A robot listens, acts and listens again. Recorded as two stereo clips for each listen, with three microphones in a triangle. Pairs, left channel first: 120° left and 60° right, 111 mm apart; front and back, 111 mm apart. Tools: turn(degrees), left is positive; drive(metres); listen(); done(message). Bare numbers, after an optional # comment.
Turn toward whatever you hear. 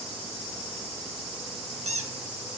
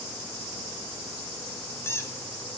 # The squeak: 70° right.
turn(-70)
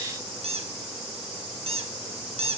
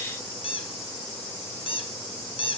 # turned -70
# The squeak is now 35° right.
turn(-35)
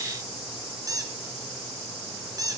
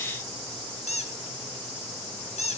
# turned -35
done("Facing the squeak.")